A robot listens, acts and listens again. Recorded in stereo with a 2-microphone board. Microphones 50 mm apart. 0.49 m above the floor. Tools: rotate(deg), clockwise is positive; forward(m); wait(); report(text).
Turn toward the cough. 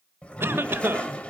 rotate(50)
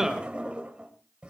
rotate(10)
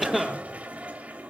report("Facing the cough, 1 to 2 m away.")